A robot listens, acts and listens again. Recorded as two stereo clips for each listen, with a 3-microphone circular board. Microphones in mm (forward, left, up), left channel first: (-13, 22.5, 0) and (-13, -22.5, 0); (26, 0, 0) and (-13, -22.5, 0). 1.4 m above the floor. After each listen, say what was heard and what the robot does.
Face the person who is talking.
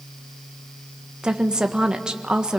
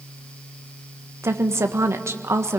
The woman speaking: 165° right. Turn 165° right.
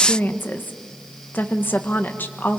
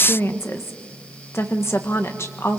The woman speaking is now 45° left. Turn 45° left.
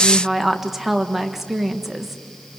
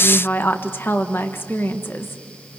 The woman speaking is now 10° right. Turn 10° right.
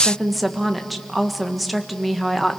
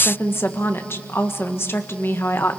Found it: a woman speaking, straight ahead.